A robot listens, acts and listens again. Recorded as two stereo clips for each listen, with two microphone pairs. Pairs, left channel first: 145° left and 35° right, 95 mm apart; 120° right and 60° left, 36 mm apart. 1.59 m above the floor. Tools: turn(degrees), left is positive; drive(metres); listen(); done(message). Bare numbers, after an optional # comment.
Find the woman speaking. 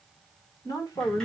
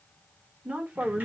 # The woman speaking: 95° left.
turn(95)
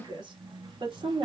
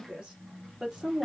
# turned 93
# The woman speaking is now 10° right.
turn(-10)
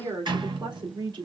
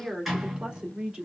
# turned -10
done("Found it: a woman speaking, straight ahead, 2 to 4 m away.")